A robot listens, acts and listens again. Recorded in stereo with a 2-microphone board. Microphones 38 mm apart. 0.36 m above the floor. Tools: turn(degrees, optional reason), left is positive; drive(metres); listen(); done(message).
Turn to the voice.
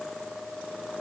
listen()
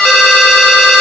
listen()
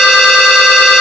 done("I can't make out anyone speaking, only a ringtone.")